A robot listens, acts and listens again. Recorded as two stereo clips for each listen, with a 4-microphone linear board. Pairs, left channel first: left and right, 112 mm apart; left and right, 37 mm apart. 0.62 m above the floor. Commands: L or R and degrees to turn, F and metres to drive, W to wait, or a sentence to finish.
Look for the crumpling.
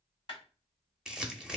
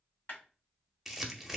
R30
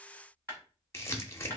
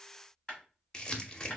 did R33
L25
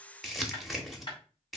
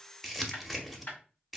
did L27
Found it: crumpling, straight ahead.